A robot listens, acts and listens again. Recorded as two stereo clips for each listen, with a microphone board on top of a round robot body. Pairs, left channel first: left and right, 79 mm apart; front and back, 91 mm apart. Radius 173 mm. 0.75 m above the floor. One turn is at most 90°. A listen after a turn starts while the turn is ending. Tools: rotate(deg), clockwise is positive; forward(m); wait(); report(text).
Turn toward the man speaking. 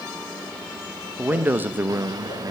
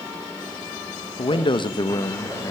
rotate(40)
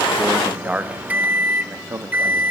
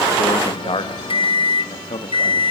rotate(30)
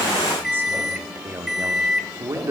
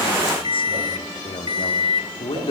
rotate(35)
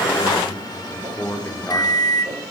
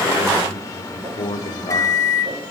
rotate(-25)
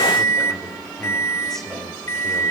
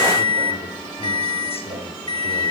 report("Found it: a man speaking, straight ahead.")